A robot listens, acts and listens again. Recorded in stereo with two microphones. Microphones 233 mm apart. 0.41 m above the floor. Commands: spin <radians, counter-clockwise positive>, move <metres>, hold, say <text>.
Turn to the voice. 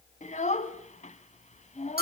spin 0.52
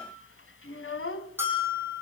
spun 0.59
spin 2.01
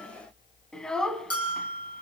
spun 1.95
say Facing the child speaking, 1 to 2 m away.